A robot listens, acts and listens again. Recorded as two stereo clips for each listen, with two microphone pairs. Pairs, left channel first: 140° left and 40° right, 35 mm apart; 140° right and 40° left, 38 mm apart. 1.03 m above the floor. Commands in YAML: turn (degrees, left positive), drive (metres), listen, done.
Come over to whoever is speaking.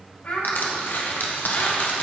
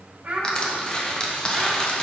turn: 100
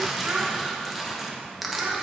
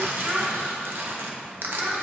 turn: -10
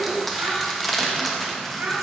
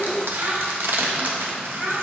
drive: 1.0
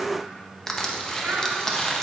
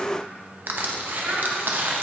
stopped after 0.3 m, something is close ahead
done: "Blocked. The child speaking is further on, straight ahead."